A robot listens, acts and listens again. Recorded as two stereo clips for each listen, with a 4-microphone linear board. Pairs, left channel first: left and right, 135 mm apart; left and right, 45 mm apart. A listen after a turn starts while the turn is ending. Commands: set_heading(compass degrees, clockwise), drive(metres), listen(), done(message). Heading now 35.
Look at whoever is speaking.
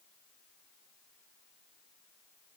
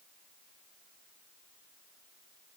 listen()
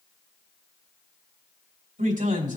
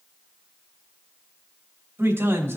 set_heading(100)
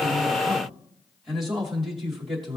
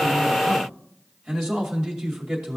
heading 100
done("Facing the man speaking, 2 to 4 m away.")